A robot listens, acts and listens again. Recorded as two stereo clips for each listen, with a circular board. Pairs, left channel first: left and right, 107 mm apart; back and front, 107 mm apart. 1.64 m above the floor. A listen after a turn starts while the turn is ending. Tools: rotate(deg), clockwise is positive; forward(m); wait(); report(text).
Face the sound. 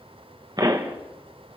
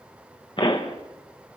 rotate(140)
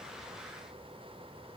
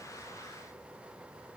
report("Facing where the pop came from. I can't hear it now.")